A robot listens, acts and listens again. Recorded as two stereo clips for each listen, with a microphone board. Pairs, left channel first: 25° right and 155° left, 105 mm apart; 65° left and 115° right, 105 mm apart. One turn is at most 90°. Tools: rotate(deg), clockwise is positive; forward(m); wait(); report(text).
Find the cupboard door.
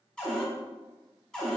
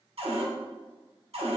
rotate(90)
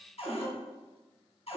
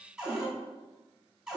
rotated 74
rotate(30)
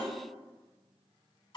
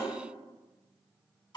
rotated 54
rotate(-25)
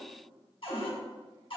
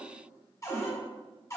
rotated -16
rotate(-10)
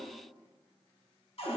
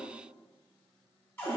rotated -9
report("Found it: a cupboard door, straight ahead.")